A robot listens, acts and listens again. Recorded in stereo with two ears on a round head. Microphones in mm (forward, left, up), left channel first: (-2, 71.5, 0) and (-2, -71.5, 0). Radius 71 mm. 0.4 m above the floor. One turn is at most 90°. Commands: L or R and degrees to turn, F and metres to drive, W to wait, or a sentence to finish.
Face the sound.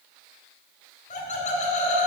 L50
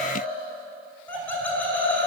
L15
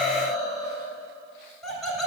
Facing the laughter.